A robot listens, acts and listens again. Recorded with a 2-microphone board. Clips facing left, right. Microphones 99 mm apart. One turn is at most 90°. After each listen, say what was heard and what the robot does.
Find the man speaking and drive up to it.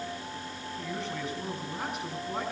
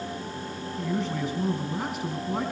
Turn 30° right.
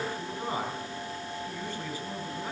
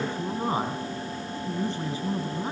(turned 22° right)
So it is at 155° right. Turn 90° right.
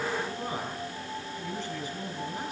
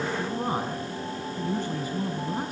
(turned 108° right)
The man speaking is now 45° right. Turn 45° right.
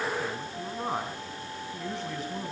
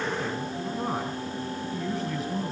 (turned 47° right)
Drive 1.0 m forward.
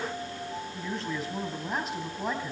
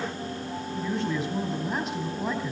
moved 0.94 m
Drive 1.0 m forward.
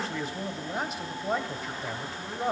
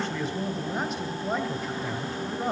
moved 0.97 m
Drive 1.0 m forward.
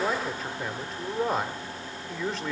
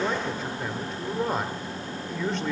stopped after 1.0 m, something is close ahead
Arrived at the man speaking, straight ahead.